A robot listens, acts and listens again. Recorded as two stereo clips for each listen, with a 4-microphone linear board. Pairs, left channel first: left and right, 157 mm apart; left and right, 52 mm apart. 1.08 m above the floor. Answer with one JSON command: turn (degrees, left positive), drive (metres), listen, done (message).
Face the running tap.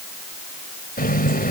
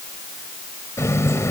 {"turn": 70}
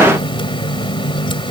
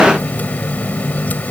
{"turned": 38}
{"turn": 35}
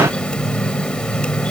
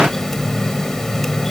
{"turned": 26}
{"done": "Facing the running tap."}